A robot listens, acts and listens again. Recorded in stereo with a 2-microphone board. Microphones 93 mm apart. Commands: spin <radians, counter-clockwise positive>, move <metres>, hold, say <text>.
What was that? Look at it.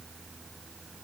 hold
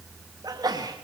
spin -0.70
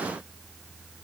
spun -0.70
hold
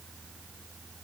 say I heard a sneeze, but can't make it out now. It was about straight ahead or 100° right.